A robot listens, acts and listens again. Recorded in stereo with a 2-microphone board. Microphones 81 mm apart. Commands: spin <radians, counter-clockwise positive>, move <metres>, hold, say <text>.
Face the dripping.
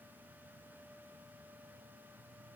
hold
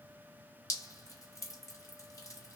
spin 0.70
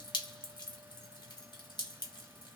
spin 1.66
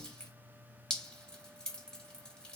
spin 0.26
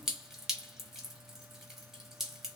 say Facing the dripping.